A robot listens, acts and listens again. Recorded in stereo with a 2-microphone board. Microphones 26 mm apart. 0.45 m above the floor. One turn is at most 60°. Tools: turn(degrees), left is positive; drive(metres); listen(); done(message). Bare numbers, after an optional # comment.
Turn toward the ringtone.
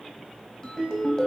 # The ringtone: about 25° left or 155° left.
turn(25)
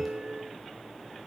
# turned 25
done("Found it: a ringtone, straight ahead.")